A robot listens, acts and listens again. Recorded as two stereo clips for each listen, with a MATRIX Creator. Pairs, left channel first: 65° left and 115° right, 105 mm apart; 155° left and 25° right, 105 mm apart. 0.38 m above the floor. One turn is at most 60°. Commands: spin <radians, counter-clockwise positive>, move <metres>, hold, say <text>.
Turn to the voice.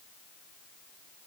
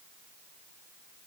hold
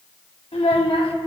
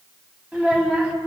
spin 0.96
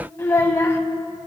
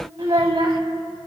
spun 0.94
say Facing the child speaking.